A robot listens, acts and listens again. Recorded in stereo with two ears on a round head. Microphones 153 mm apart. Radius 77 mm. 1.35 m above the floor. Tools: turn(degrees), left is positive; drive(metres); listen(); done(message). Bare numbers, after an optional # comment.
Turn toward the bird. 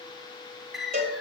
turn(30)
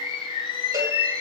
# So it is at 150° left.
turn(150)
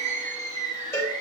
# The bird is now 40° right.
turn(-40)
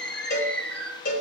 done("Found it: a bird, straight ahead.")